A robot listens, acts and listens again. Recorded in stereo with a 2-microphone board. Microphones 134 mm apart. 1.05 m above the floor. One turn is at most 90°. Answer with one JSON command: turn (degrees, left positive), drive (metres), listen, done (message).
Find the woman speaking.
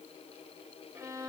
{"listen": true}
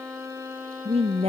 {"turn": -45}
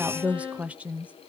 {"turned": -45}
{"turn": -10}
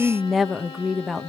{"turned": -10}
{"done": "Found it: a woman speaking, straight ahead."}